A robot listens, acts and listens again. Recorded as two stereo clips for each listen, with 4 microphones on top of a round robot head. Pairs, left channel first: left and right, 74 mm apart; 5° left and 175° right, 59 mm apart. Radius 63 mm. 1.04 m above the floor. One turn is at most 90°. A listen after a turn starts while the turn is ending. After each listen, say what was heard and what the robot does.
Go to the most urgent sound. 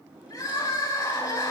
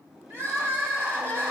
The crying: 140° left. Turn 90° left.
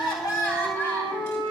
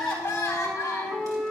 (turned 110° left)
The crying is now 30° left. Turn 30° left.
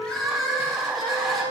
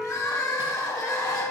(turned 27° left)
Drive 1.0 m forward.
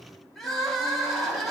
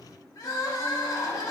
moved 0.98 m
Drive 1.0 m forward.
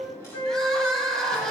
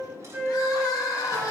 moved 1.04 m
The crying is now 10° left. Turn 10° left.
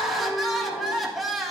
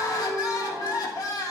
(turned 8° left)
Drive 1.0 m forward.
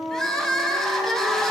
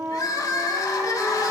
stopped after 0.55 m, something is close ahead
The crying is now 10° left. Turn 10° left.
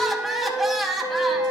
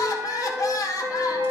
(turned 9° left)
I am next to the crying.